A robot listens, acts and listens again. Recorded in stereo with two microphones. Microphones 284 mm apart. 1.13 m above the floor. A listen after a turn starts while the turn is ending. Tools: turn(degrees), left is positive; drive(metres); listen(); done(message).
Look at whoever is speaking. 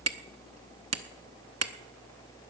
listen()
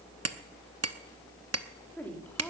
turn(degrees=30)
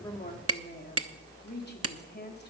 turn(degrees=145)
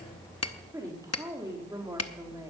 turn(degrees=-10)
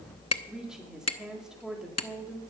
done("Found it: a woman speaking, straight ahead.")